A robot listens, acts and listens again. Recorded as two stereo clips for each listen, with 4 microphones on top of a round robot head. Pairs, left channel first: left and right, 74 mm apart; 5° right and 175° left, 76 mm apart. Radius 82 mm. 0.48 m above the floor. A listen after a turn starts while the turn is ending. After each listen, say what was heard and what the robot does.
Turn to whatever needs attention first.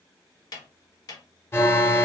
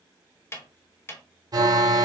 The alarm: 145° left. Turn 145° left.
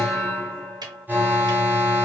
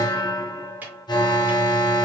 The alarm is now 25° right. Turn 25° right.
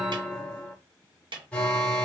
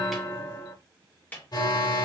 The alarm is now 15° left. Turn 15° left.
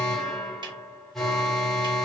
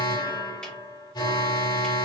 Facing the alarm.